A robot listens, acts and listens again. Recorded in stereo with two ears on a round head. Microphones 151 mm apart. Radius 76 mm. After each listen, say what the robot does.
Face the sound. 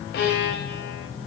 Turn 75° left.
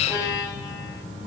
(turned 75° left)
Turn 20° left.
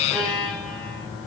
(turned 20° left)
Facing the violin, over 4 m away.